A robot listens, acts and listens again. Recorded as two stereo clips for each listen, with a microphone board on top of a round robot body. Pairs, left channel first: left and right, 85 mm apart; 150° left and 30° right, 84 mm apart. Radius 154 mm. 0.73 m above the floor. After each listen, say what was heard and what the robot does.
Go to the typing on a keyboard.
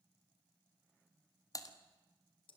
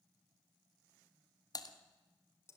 The typing on a keyboard: 125° left. Turn 125° left.
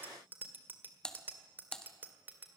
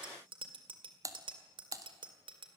The typing on a keyboard is now 10° left. Turn 10° left.
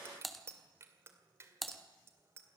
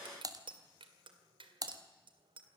Drive 1.0 m forward.
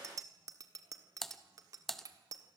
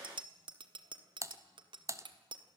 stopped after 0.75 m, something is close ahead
Arrived at the typing on a keyboard, straight ahead.